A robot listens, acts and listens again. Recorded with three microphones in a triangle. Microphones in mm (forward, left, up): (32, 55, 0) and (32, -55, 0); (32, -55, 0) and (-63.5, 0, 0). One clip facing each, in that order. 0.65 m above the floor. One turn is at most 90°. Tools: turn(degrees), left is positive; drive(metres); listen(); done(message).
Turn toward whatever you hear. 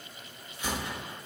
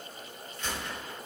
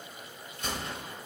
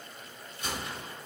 turn(degrees=15)
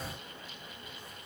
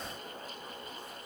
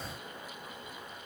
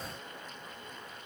done("Facing where the gunshot came from. I can't hear it now.")